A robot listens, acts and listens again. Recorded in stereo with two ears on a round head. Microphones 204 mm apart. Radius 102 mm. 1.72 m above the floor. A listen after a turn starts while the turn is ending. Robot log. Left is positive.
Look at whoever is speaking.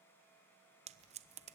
cmd idle
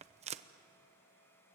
cmd idle
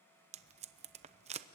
end: I can't make out anyone speaking to turn to.